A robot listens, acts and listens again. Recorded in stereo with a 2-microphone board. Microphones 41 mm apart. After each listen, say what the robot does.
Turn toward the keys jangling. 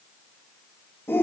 Keep listening.
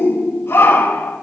Keep listening.
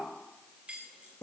Turn 30° right.
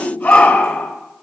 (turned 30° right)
Keep listening.
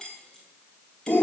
Turn 15° left.
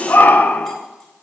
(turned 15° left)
Keep listening.
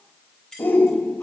Turn 15° left.
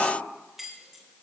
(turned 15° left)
Found it: keys jangling, straight ahead.